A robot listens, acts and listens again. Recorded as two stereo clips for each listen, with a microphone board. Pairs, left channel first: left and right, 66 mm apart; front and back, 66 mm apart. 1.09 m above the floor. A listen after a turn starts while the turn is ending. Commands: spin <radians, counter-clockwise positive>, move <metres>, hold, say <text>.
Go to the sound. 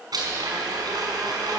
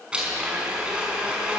spin -1.83
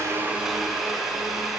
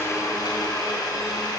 move 1.0
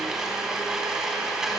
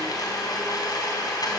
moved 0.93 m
spin -0.17
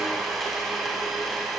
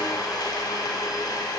move 1.0
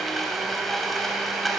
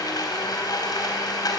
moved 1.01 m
move 1.0
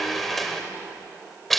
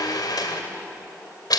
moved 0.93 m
move 1.0
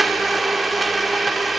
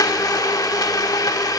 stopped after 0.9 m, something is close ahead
say Arrived at the blender, straight ahead.